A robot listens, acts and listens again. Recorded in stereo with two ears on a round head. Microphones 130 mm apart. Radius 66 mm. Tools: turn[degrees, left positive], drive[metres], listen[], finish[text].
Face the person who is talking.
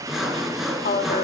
Thought: The woman speaking: about 65° left or 115° left.
Action: turn[65]
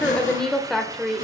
Action: finish[Facing the woman speaking, 2 to 4 m away.]